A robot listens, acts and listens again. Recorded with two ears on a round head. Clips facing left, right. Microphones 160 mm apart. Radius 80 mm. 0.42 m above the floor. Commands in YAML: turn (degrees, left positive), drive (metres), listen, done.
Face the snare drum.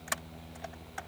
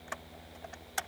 listen: true
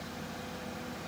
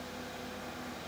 listen: true
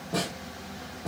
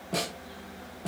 turn: -25
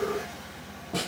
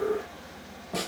done: "Found it: a snare drum, straight ahead."